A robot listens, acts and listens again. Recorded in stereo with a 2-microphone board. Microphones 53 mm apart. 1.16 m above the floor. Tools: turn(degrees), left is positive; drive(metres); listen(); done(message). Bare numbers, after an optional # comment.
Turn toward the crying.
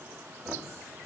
listen()
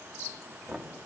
listen()
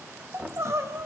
# The crying: about 60° right or 120° right.
turn(-60)
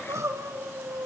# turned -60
# So it is at 65° right.
turn(-65)
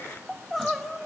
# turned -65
done("Found it: crying, straight ahead.")